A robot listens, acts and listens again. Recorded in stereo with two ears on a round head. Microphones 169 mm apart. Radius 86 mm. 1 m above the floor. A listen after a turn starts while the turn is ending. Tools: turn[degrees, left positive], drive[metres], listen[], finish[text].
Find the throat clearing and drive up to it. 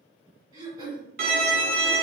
Thought: The throat clearing: about 20° right or 160° right.
Action: turn[-20]
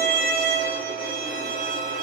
Action: listen[]
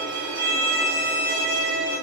Action: listen[]
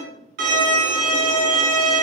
Action: finish[I heard throat clearing, but can't make it out now. It was about straight ahead or 140° right. I did not reach it.]